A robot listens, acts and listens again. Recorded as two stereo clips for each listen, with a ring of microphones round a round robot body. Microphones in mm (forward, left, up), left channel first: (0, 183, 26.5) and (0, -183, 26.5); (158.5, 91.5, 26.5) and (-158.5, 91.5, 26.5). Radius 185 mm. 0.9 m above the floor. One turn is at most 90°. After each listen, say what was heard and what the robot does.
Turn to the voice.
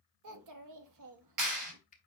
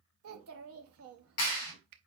The child speaking: 130° right. Turn 90° right.
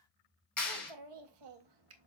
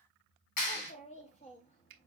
The child speaking is now 70° right. Turn 70° right.
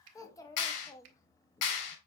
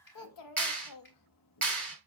The child speaking is now 10° left. Turn 10° left.
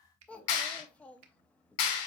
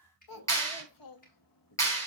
Facing the child speaking, 1 to 2 m away.